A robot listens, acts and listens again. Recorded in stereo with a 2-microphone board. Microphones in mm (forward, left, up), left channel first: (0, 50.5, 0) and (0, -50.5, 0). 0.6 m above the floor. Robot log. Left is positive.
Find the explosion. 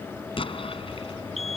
note: The explosion: about 70° left or 110° left.
cmd yaw +70
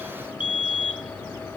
cmd idle
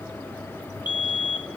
end: I heard an explosion, but can't make it out now. It was about straight ahead or 40° left.